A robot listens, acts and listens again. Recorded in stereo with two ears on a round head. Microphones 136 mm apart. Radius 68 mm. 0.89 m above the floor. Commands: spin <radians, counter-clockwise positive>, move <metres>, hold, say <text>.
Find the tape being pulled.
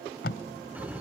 spin 1.31
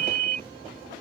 hold
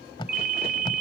spin 0.52
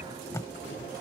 spin 0.35
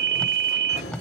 say Found it: tape being pulled, straight ahead.